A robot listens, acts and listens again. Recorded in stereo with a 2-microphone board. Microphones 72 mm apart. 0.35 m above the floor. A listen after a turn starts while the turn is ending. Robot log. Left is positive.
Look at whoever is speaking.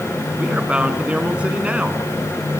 note: The man speaking: about 20° right or 160° right.
cmd yaw -20
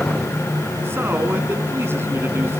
note: So it is at 145° right.
cmd yaw -145
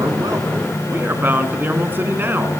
note: The man speaking is now 30° right.
cmd yaw -30
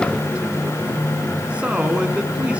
note: The man speaking is now 15° right.
cmd yaw -15
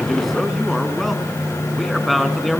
end: Facing the man speaking.